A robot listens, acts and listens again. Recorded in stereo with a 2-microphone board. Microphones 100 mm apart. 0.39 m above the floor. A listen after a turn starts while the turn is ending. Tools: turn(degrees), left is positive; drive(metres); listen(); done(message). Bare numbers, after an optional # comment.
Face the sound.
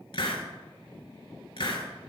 # The hiss: about 60° left or 120° left.
turn(60)
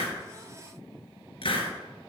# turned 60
# So it is at 60° left.
turn(60)
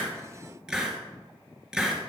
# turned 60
done("Facing the hiss, 1 to 2 m away.")